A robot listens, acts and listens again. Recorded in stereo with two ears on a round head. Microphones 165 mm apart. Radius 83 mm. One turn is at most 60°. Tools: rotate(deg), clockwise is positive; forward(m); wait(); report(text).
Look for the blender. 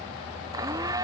rotate(20)
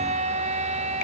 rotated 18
rotate(60)
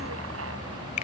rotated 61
rotate(60)
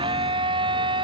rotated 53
rotate(25)
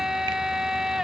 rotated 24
report("Found it: a blender, straight ahead.")